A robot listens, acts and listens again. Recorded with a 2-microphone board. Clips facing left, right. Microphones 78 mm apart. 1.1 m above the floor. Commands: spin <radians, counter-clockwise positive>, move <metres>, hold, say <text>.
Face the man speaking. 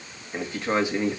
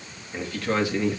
spin 0.35
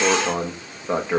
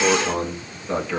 spin 0.44
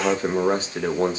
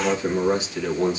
spin 2.53
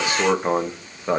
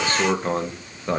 spin 0.26
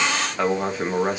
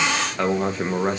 say Facing the man speaking.